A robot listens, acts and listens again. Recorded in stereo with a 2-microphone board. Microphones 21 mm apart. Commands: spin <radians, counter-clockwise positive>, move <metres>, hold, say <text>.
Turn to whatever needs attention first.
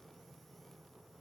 hold
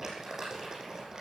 hold
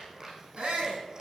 spin -1.22
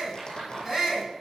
spin -0.52
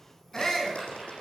spin 0.35
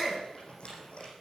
say Found it: a shout, straight ahead.